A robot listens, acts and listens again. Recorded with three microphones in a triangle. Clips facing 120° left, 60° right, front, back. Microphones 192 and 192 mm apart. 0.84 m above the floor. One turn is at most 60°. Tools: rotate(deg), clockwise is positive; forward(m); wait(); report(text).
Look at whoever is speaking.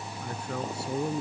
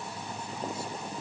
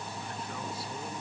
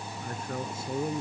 rotate(-60)
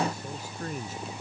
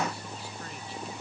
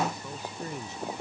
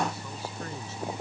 rotate(-60)
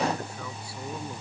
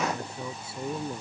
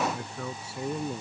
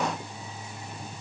report("Facing the man speaking.")